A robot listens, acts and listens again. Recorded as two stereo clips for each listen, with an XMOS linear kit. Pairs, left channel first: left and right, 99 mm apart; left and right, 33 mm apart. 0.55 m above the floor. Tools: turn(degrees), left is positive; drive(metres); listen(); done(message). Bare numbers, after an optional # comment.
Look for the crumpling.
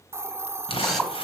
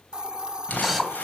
# The crumpling: about 70° left or 110° left.
turn(70)
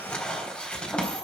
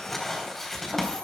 # So it is at 10° left.
turn(10)
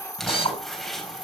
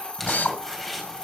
done("Found it: crumpling, straight ahead, 2 to 4 m away.")